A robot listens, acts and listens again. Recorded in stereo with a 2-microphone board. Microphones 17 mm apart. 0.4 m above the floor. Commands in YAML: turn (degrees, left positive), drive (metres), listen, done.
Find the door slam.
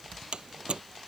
turn: -50
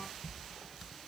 listen: true
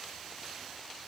done: "I heard a door slam, but can't make it out now. It was about straight ahead or 80° right."